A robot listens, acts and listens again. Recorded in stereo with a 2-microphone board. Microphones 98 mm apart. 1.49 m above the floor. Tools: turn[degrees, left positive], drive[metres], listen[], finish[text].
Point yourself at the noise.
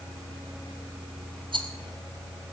Thought: The rattle: about 50° right or 130° right.
Action: turn[-50]
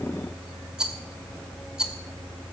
Thought: So it is at 10° right.
Action: turn[-10]
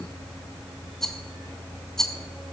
Action: finish[Facing the rattle, 1 to 2 m away.]